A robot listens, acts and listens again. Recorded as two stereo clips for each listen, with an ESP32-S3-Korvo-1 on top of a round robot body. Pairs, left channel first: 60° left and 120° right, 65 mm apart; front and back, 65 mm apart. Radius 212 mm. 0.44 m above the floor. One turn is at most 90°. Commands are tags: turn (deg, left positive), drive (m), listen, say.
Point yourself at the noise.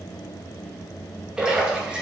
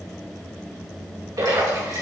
<turn deg="90"/>
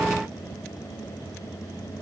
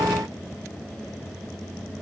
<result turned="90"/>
<turn deg="75"/>
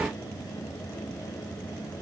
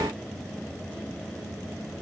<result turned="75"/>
<say>Facing where the splash came from. I can't hear it now.</say>